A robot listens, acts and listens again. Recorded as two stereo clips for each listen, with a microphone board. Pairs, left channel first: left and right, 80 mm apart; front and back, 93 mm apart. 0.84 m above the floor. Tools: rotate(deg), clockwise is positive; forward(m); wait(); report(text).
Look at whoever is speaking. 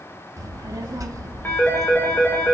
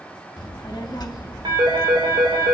rotate(45)
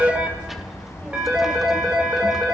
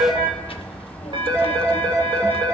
report("Found it: a child speaking, straight ahead.")